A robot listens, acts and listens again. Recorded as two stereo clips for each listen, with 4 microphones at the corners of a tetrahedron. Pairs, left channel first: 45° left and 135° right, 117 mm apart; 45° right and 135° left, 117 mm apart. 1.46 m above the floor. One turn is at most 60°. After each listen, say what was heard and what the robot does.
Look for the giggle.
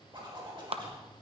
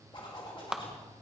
Keep listening.
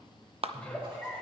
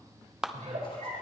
The giggle: 125° left. Turn 60° left.
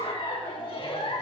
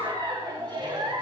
The giggle is now 85° left. Turn 60° left.
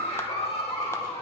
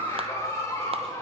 The giggle is now 15° left. Turn 15° left.
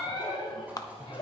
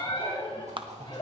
Found it: a giggle, straight ahead, 2 to 4 m away.